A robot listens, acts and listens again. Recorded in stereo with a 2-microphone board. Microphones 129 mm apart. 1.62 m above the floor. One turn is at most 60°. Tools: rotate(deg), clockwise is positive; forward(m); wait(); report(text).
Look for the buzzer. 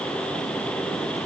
wait()
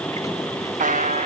rotate(60)
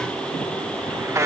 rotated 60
rotate(20)
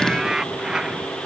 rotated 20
report("Facing the buzzer.")